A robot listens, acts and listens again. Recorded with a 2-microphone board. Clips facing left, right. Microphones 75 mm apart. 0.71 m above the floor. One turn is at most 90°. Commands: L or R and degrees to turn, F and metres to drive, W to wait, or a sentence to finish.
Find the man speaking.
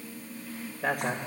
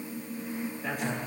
L90
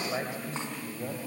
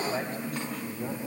L10
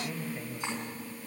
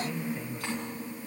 Found it: a man speaking, straight ahead.